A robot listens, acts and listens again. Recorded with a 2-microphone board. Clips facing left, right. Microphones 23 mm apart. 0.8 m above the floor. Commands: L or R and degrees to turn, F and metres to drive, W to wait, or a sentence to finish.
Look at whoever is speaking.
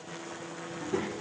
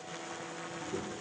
L45
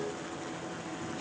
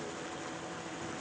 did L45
W
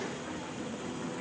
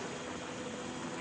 L40
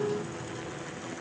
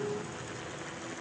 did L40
L20
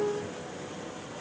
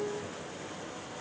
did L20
W
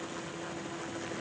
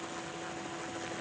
W
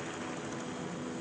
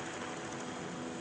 L10
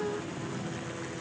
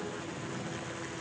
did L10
Found it: a child speaking, straight ahead, 2 to 4 m away.